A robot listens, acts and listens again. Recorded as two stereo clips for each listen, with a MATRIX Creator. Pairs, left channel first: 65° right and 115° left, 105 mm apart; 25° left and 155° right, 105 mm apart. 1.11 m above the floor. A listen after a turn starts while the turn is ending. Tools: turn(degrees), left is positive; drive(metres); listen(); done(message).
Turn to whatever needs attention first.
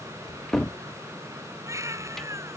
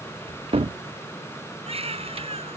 turn(degrees=175)
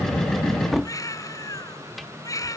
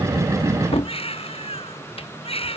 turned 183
turn(degrees=-10)
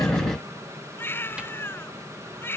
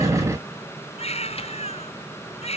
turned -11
done("Found it: a baby crying, straight ahead.")